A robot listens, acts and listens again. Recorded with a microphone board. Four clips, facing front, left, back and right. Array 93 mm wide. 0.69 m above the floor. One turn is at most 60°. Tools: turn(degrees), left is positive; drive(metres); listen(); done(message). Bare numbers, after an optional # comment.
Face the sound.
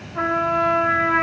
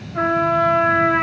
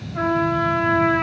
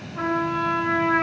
# The trumpet: 105° left.
turn(60)
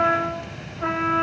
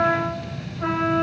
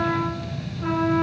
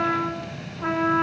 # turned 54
# The trumpet is now 50° left.
turn(50)
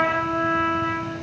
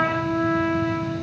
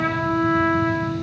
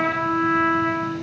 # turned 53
done("Found it: a trumpet, straight ahead, 2 to 4 m away.")